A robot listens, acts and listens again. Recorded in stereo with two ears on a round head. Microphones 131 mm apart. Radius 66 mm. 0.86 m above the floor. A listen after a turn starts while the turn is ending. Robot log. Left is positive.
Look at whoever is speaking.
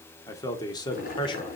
note: The man speaking: about 30° left or 150° left.
cmd yaw +30
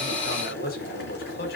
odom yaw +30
note: So it is at 110° left.
cmd yaw +110
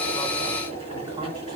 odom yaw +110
cmd idle
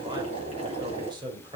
note: The man speaking is now 30° right.
cmd yaw -30
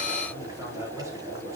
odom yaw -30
cmd idle
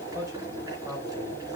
note: The man speaking is now 20° right.
cmd yaw -20
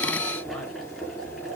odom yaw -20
cmd idle
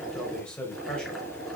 end: Facing the man speaking.